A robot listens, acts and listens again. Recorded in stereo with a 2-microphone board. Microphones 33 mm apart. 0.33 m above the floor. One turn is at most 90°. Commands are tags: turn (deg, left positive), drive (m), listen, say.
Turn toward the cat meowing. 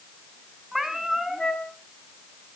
<turn deg="-30"/>
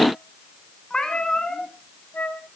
<turn deg="20"/>
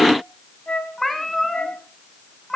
<say>Found it: a cat meowing, straight ahead.</say>